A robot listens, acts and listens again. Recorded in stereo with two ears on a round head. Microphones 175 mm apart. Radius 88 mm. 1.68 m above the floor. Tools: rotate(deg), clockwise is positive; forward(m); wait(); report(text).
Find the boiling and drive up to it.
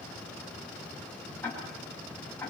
wait()
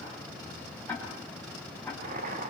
rotate(40)
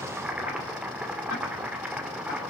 forward(1.0)
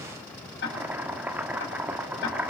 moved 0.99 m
rotate(10)
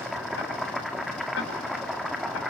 forward(1.0)
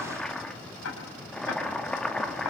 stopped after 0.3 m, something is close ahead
report("Arrived at the boiling, straight ahead.")